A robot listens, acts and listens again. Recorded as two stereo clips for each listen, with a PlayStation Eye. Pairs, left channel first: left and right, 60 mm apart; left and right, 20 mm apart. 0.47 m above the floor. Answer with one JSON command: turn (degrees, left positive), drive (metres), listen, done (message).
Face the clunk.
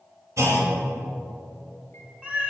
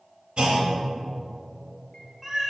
{"turn": -60}
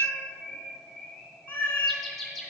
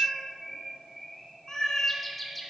{"listen": true}
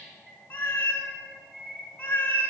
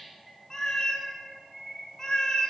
{"done": "I heard a clunk, but can't make it out now. It was about straight ahead or 60° right."}